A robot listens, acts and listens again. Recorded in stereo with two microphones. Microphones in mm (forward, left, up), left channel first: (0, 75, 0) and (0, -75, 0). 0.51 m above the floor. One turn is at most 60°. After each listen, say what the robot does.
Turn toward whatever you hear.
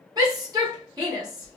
Turn 25° right.
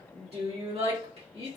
Turn 60° right.
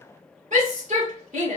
Turn 60° right.
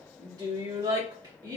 Turn 30° right.
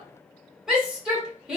Facing the shout, 1 to 2 m away.